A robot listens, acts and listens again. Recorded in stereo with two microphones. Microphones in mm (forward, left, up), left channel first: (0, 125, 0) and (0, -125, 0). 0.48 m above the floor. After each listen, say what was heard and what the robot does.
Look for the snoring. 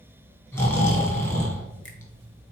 Turn 30° left.
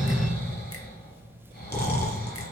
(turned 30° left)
So it is at 140° left. Turn 140° left.
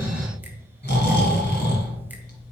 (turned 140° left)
The snoring is now 40° left. Turn 40° left.
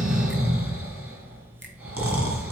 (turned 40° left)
The snoring is now 10° right. Turn 10° right.
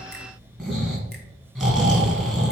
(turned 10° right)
Facing the snoring, 2 to 4 m away.